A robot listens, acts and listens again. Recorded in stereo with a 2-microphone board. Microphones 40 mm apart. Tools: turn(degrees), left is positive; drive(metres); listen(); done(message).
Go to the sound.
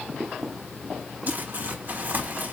turn(degrees=-50)
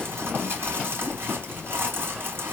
turn(degrees=-75)
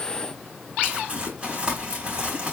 turn(degrees=-25)
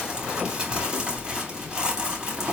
turn(degrees=-20)
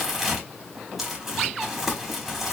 drive(metres=1.0)
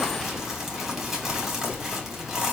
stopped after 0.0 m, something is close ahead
turn(degrees=-10)
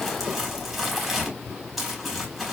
done("Blocked. The crumpling is further on, straight ahead.")